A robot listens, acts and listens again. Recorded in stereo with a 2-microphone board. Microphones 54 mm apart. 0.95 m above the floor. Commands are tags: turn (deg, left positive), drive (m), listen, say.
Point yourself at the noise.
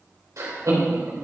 <turn deg="-70"/>
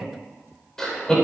<turn deg="15"/>
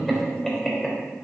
<turn deg="10"/>
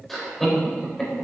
<turn deg="10"/>
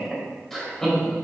<turn deg="10"/>
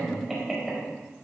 <say>Facing the laughter.</say>